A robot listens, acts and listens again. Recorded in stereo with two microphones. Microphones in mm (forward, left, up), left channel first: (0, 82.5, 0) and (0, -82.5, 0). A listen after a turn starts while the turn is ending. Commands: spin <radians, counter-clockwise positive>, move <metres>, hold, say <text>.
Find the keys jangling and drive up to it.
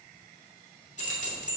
spin 0.79
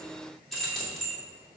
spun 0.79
move 1.0
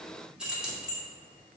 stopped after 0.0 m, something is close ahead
say Blocked. The keys jangling is further on, straight ahead.